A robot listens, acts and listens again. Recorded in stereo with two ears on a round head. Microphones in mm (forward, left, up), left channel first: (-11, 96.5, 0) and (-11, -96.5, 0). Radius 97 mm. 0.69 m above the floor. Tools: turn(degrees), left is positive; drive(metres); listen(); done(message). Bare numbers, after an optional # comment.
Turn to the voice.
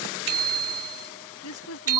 turn(90)
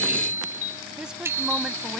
done("Facing the woman speaking.")